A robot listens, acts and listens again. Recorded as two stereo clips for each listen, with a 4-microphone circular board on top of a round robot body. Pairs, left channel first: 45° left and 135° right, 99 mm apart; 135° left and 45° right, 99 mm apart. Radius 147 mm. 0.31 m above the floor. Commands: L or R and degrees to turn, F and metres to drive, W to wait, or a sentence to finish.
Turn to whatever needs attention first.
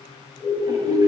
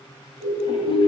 L110
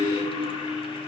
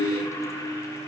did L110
W
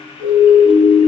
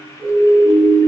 L10
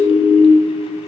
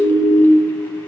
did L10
Facing the siren.